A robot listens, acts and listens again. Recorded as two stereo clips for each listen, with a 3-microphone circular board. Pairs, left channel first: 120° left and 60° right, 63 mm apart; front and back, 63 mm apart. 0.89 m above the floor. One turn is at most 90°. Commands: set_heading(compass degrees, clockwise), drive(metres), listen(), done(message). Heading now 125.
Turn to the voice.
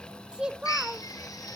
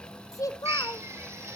set_heading(110)
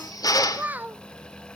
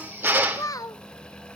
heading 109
done("Facing the child speaking, 1 to 2 m away.")